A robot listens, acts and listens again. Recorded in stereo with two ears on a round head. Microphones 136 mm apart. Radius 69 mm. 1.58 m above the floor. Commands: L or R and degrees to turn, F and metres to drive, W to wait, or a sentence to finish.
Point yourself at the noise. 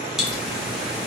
L30
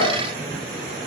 W
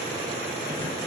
I heard a pop, but can't make it out now. It was about 30° right or 150° left.